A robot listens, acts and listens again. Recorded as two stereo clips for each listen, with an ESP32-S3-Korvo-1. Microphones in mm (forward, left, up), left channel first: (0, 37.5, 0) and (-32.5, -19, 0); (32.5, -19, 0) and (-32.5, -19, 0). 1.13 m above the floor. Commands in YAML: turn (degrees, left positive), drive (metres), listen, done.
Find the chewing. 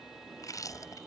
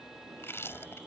turn: 50
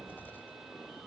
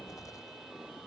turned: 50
done: "Facing the chewing."